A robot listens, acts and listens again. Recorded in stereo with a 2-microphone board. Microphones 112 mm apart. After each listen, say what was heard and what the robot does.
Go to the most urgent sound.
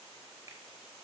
Keep listening.
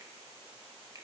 Keep listening.
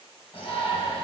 The shout: about 60° left or 120° left. Turn 60° left.
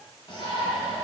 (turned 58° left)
So it is at 50° left. Turn 50° left.
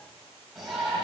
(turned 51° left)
Drive 1.0 m forward.
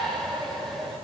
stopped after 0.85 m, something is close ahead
Arrived at the shout, straight ahead.